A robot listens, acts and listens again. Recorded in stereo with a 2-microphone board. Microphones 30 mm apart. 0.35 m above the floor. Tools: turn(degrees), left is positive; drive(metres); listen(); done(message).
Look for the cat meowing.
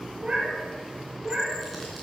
turn(degrees=-30)
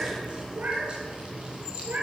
turn(degrees=-130)
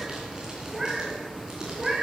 turn(degrees=-15)
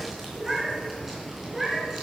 done("Found it: a cat meowing, straight ahead, 2 to 4 m away.")